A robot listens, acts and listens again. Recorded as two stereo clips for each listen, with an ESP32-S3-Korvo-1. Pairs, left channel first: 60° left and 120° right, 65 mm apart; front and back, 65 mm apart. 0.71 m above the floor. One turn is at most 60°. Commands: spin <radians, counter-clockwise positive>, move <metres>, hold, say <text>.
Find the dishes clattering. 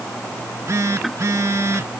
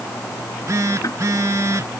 hold
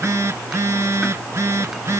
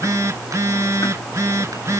hold
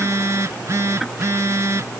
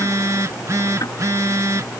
say I can't make out dishes clattering, only a phone buzzing.